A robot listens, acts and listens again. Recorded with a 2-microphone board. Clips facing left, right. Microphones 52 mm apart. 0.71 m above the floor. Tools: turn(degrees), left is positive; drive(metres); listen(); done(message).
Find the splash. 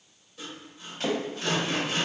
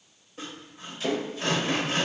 turn(degrees=55)
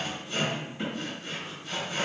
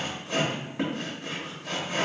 listen()
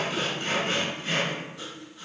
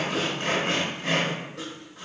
done("I heard a splash, but can't make it out now. It was about straight ahead or 70° left.")